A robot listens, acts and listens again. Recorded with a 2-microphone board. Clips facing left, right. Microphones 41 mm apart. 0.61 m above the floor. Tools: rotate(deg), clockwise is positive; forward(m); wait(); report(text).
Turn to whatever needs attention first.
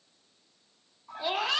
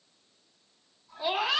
rotate(30)
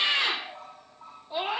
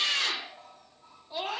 rotate(-25)
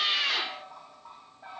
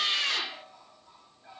rotate(-10)
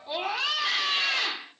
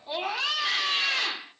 report("Found it: a scream, straight ahead, 1 to 2 m away.")